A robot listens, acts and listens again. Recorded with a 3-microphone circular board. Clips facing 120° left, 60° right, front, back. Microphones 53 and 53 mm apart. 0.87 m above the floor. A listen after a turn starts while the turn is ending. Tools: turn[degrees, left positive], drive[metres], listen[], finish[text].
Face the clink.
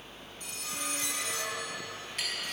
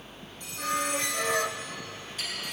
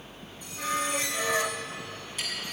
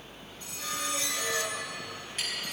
Thought: The clink: 135° left.
Action: turn[135]
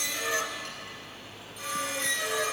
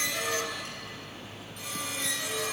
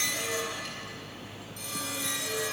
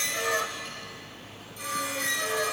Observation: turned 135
Action: listen[]
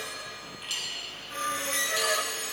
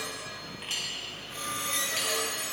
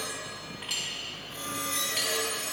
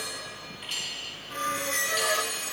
Action: finish[Facing the clink, over 4 m away.]